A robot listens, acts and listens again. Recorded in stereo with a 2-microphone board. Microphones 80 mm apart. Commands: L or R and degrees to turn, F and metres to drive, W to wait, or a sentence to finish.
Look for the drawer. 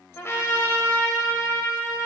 W
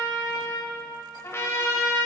W
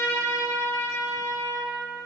I can't make out a drawer, only a trumpet.